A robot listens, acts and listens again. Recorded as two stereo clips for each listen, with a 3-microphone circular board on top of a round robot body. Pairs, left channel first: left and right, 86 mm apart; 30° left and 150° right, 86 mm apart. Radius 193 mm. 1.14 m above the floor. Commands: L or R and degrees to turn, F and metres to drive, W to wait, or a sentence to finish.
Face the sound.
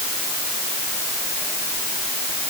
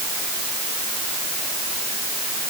W
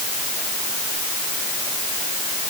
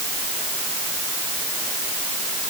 W
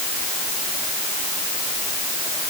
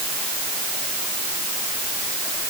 I can't make out anything.